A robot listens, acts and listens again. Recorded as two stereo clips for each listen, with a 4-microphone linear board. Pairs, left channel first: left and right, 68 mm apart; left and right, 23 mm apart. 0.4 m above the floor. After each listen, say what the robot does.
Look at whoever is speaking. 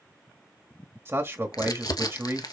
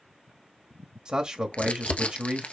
Turn 40° right.
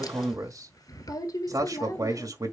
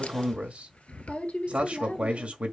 Turn 90° right.
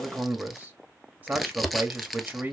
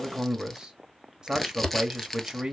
Turn 30° right.
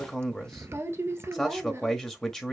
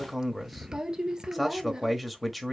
Turn 10° left.
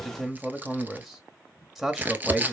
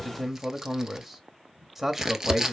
Found it: a man speaking, straight ahead.